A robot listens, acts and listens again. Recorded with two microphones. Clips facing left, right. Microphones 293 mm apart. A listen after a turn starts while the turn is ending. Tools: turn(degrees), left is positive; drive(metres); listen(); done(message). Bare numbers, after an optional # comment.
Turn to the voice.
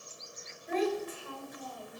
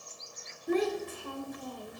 # The child speaking: about 50° right or 130° right.
turn(-50)
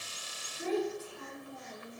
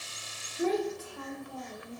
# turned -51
# So it is at 80° right.
turn(-80)
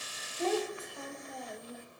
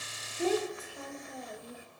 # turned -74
done("Found it: a child speaking, straight ahead, 2 to 4 m away.")